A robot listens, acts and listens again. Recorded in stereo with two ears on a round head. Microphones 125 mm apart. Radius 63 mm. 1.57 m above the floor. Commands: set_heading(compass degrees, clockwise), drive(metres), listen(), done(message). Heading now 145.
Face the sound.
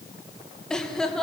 set_heading(115)
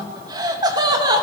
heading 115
set_heading(145)
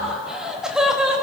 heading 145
done("Facing the laughter.")